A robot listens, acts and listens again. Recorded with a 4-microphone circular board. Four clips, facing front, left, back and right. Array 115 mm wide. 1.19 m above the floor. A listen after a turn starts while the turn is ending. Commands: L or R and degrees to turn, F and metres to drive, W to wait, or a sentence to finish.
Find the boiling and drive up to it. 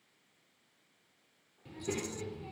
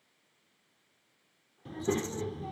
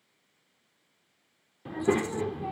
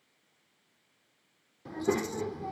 W
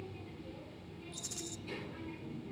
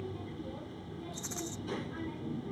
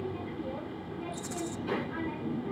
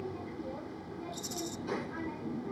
W
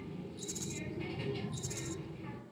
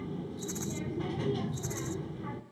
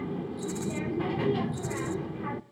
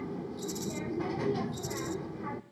I can't make out boiling to turn to.